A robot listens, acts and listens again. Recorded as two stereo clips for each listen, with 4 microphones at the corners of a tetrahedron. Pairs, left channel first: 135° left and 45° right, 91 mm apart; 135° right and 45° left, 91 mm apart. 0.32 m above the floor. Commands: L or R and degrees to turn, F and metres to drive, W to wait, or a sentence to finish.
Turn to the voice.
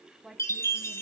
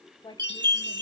R130
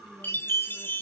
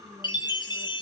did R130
W
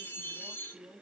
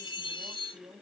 L20
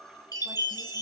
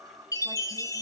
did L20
W
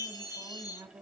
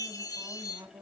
Found it: a woman speaking, straight ahead.